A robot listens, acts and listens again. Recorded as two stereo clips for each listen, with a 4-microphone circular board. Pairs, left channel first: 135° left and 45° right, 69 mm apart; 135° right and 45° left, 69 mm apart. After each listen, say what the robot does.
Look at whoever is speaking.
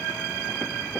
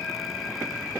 Keep listening.
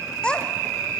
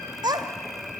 Turn 60° left.
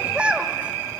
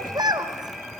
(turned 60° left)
Turn 30° left.
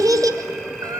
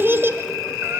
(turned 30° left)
Turn 15° right.
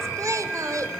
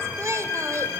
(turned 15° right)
Facing the child speaking, 1 to 2 m away.